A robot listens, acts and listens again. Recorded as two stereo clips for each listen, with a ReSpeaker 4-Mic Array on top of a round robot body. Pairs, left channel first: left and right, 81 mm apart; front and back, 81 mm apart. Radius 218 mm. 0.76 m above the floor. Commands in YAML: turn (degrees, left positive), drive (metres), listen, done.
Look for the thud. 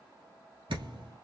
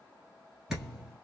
turn: -100
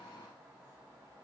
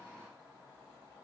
done: "Facing where the thud came from. I can't hear it now."